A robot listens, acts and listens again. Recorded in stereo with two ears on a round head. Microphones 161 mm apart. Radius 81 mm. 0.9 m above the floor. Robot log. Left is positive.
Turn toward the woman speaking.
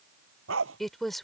cmd yaw +30
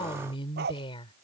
note: So it is at 150° left.
cmd yaw +150
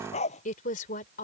note: The woman speaking is now 45° left.
cmd yaw +45
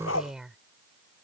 end: Facing the woman speaking.